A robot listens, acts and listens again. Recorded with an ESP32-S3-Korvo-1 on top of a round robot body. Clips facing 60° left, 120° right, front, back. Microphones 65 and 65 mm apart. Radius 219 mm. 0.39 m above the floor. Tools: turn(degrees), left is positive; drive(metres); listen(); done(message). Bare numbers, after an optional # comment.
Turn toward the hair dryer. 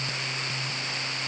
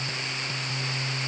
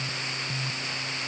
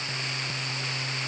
listen()
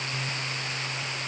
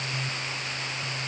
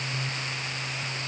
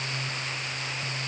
listen()
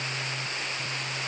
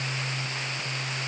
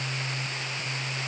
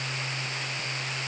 done("I can't make out a hair dryer.")